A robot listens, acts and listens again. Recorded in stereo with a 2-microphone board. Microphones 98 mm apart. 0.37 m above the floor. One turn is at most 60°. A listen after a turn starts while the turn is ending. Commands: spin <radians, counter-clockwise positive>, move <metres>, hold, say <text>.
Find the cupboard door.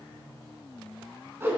hold
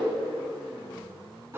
hold
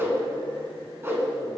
say I can't make out a cupboard door to turn to.